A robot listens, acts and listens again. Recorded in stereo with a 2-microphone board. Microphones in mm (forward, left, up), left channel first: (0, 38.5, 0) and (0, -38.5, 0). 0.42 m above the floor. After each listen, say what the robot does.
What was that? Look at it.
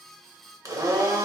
Turn 45° right.
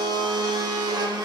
Turn 85° right.
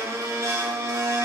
Turn 40° right.
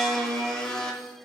Turn 10° left.
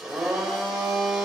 Turn 10° right.
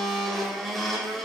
Found it: a blender, straight ahead.